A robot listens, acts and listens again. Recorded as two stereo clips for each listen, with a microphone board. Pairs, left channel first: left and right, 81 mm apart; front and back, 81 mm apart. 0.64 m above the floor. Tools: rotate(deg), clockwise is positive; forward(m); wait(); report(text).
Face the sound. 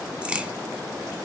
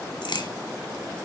rotate(15)
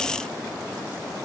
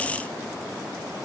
report("I heard a crack from this way, but can't make it out now.")